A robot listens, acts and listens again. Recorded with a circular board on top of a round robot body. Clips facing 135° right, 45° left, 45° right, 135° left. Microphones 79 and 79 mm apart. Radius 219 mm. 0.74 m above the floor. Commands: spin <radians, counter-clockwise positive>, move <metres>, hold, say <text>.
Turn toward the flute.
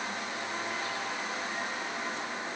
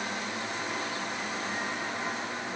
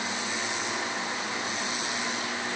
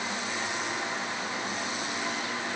hold
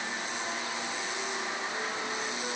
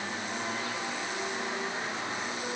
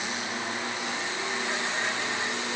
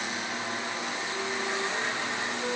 hold
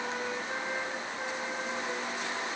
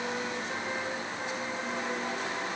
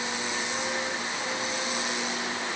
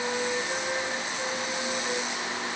say I can't make out a flute to turn to.